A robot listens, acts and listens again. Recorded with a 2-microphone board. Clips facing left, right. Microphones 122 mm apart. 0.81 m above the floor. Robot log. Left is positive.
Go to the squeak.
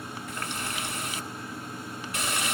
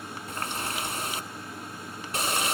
cmd idle
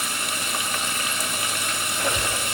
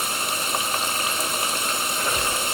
note: The squeak: about 70° left or 110° left.
cmd yaw +70
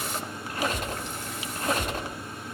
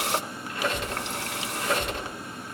note: So it is at 45° left.
cmd yaw +45
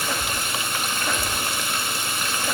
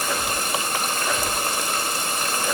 cmd fwd 1.0
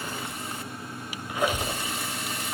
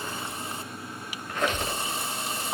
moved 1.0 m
note: The squeak is now 10° left.
cmd yaw +10
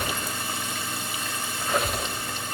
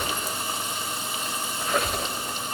cmd fwd 1.0
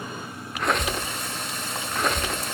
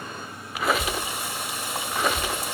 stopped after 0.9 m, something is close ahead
end: I am next to the squeak.